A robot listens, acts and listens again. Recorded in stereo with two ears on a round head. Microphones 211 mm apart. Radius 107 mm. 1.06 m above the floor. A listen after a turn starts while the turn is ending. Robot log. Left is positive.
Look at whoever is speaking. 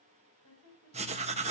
note: The woman speaking: about 65° left or 115° left.
cmd yaw +65
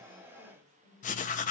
end: Found it: a woman speaking, straight ahead.